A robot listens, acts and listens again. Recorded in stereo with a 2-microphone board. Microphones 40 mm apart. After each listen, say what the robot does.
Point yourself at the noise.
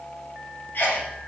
Turn 50° left.
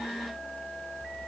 Keep listening.
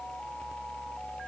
I heard a sneeze, but can't make it out now. It was about straight ahead or 80° left.